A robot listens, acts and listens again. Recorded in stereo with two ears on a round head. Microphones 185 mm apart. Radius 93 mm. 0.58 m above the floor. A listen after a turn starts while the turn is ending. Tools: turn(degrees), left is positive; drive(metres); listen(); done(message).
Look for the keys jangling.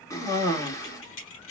turn(degrees=70)
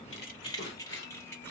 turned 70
turn(degrees=10)
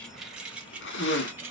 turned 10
turn(degrees=-10)
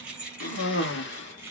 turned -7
turn(degrees=-10)
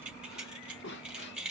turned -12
done("Facing the keys jangling, 2 to 4 m away.")